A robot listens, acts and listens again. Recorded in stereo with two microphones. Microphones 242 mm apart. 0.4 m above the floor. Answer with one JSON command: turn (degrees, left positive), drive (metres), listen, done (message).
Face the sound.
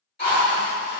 {"turn": 45}
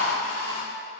{"turn": 85}
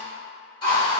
{"turn": 20}
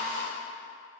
{"turn": 10}
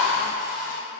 {"done": "Facing the drill."}